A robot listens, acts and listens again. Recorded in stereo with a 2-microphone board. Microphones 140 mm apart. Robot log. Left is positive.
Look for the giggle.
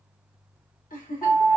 note: The giggle: about 75° left or 105° left.
cmd yaw +75
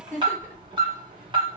note: So it is at 15° left.
cmd yaw +15
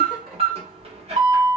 cmd idle
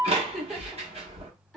end: Facing the giggle.